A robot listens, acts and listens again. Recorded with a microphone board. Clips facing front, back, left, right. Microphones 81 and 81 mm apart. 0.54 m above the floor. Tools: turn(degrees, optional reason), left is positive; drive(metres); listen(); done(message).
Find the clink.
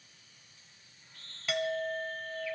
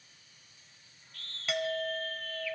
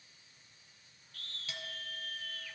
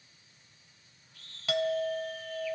turn(degrees=-90, reason="The clink: 90° right.")
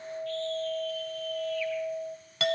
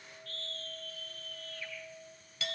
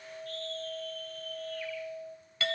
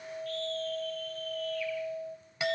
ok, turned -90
turn(degrees=-15, reason="The clink is now 15° right.")
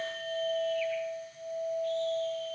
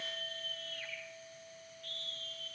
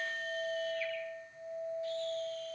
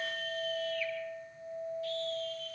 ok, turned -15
done("Facing the clink.")